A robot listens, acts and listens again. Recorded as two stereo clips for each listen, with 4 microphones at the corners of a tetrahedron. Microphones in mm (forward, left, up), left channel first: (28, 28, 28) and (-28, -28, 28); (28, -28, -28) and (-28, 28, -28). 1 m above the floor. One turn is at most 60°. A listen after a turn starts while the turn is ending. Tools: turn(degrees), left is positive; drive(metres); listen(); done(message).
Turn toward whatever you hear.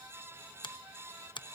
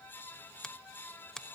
turn(degrees=35)
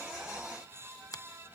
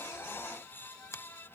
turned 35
done("Found it: a finger snap, straight ahead.")